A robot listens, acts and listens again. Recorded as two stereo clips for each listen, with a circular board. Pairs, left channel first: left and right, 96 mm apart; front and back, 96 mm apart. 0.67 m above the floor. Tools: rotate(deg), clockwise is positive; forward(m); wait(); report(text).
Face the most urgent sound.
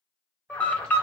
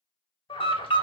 rotate(-15)
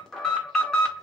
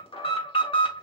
report("Facing the alarm, 1 to 2 m away.")